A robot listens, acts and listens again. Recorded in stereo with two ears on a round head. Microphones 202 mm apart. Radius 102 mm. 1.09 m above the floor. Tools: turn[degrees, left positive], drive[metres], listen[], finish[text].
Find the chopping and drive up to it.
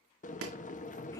Thought: The chopping: about 70° right or 110° right.
Action: turn[-70]
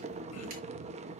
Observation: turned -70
Action: listen[]
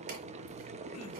Action: listen[]
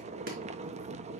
Action: finish[I heard chopping, but can't make it out now. It was about straight ahead or 40° right. I did not reach it.]